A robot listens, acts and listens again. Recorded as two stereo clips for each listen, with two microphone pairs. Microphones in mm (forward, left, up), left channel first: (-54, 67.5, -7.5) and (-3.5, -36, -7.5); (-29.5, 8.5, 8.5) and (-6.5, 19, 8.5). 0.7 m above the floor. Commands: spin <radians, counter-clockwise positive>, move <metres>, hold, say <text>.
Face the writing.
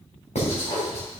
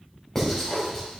spin 2.18
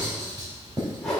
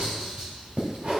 spin -0.17
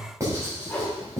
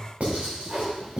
say Found it: writing, straight ahead, 2 to 4 m away.